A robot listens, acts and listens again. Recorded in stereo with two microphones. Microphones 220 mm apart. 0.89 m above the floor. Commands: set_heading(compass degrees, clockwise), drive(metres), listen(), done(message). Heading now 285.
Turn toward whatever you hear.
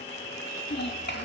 set_heading(235)
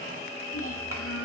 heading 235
set_heading(155)
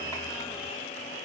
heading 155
listen()
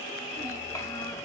listen()
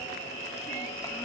done("Facing where the child speaking came from. I can't hear it now.")